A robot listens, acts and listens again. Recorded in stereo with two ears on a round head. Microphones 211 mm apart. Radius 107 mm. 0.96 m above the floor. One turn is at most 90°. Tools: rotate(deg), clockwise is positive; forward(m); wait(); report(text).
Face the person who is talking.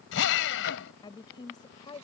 rotate(-20)
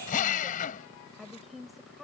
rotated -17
report("Found it: a woman speaking, straight ahead.")